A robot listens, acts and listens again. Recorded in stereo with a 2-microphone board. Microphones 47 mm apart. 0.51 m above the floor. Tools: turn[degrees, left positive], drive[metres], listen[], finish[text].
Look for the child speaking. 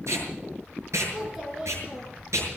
Action: turn[-30]
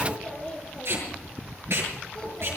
Thought: So it is at 15° left.
Action: turn[15]
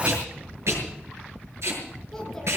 Action: finish[Found it: a child speaking, straight ahead, over 4 m away.]